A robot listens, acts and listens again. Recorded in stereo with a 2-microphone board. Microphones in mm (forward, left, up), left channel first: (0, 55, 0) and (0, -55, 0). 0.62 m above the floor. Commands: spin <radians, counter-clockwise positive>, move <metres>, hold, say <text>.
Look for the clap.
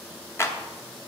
spin 0.44
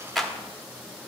say Found it: a clap, straight ahead, 1 to 2 m away.